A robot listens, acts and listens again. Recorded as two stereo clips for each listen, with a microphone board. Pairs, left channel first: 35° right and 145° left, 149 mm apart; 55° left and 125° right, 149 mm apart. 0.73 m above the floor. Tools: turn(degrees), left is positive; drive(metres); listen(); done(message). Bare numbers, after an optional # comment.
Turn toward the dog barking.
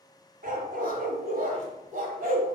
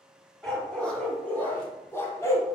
# The dog barking: 125° left.
turn(125)
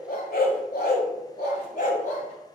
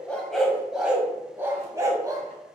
# The dog barking is now 60° right.
turn(-60)
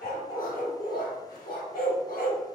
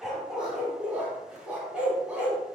# The dog barking is now 40° right.
turn(-40)
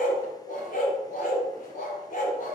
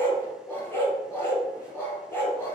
# The dog barking is now 20° right.
turn(-20)
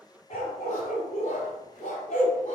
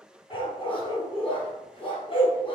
done("Found it: a dog barking, straight ahead.")